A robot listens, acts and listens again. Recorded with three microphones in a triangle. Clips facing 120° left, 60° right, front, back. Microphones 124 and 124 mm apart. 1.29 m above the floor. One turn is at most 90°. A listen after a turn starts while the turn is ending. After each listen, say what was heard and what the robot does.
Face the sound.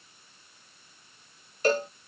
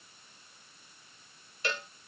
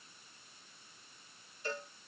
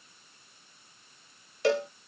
The cowbell: 170° left. Turn 90° left.
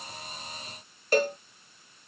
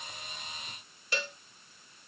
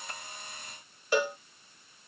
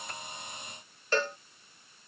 The cowbell is now 80° left. Turn 80° left.
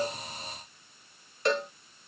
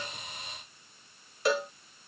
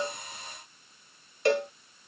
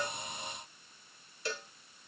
The cowbell is now 25° left. Turn 25° left.
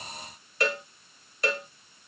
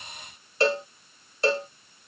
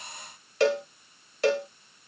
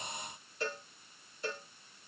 Found it: a cowbell, straight ahead.